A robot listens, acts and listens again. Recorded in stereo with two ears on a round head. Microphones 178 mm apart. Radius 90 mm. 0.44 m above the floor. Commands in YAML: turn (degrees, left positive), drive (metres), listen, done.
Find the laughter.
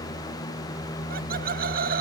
turn: -50
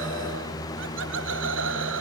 turn: -80
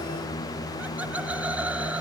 turn: -10
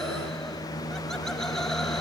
listen: true
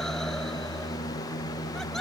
listen: true
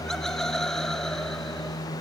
done: "Facing the laughter."